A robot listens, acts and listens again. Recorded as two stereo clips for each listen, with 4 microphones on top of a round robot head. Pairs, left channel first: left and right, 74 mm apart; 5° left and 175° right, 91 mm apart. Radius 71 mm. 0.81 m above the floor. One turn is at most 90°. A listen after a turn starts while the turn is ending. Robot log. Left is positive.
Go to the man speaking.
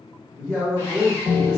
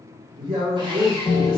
note: The man speaking: 160° right.
cmd yaw -90
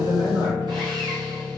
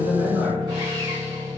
note: Nothing new. It was at 70° right.
cmd yaw -70
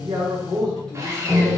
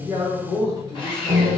note: The man speaking is now 10° left.
cmd yaw +10
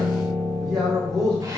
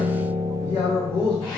cmd fwd 1.0
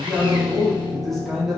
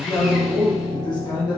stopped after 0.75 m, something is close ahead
end: I am next to the man speaking.